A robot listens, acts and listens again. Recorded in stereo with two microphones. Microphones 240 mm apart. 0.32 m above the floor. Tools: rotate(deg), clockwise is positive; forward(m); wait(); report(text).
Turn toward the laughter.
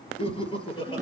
rotate(-20)
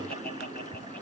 rotate(-140)
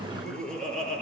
report("Facing the laughter, over 4 m away.")